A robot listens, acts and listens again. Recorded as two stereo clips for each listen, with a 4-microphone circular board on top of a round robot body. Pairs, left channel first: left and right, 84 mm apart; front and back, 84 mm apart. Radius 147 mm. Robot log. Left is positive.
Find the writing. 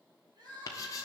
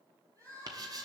note: The writing: 140° left.
cmd yaw +140
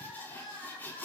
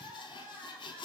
note: The writing is now 20° left.
cmd yaw +20
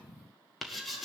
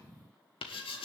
end: Facing the writing.